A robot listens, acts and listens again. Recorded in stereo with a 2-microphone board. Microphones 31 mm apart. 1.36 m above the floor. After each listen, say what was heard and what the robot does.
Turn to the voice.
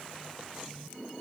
Keep listening.
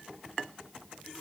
Keep listening.
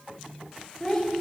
Turn 30° left.
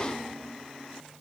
Keep listening.
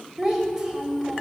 So it is at 15° right. Turn 15° right.
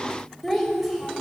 Found it: a child speaking, straight ahead.